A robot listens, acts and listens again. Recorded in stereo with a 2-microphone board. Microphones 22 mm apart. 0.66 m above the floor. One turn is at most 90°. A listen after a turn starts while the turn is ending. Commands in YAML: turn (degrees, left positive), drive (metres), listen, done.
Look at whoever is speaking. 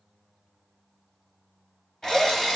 listen: true
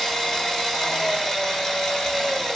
listen: true
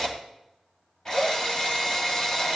done: "I can't make out anyone speaking, only a drill."